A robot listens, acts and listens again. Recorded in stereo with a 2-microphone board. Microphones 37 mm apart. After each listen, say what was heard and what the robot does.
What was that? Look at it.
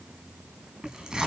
The tearing paper: about 20° right or 160° right. Turn 20° right.
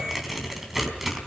Facing the tearing paper, 2 to 4 m away.